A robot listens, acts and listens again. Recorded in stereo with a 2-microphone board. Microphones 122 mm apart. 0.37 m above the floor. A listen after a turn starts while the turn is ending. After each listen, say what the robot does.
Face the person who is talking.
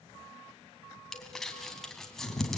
Keep listening.
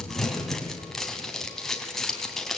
Keep listening.
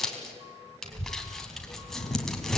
Turn 55° right.
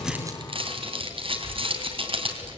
Turn 50° right.
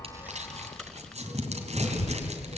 Facing the child speaking, 1 to 2 m away.